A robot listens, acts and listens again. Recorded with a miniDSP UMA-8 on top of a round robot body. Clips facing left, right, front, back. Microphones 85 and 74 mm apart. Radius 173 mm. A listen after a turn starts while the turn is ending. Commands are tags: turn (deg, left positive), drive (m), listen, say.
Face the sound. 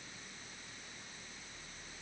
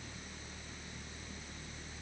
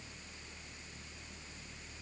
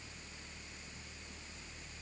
<listen/>
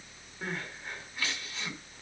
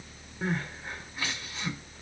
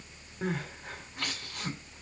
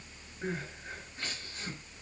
<turn deg="-15"/>
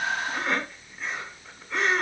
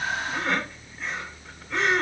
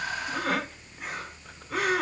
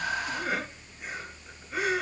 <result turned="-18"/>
<say>Found it: crying, straight ahead.</say>